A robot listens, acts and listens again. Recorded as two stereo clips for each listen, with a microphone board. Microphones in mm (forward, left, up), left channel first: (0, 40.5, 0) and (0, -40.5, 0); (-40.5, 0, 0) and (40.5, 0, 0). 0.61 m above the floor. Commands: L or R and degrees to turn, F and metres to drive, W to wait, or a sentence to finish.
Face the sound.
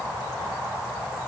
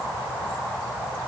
W
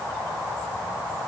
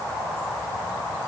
W
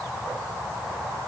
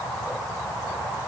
I can't make out anything to turn to.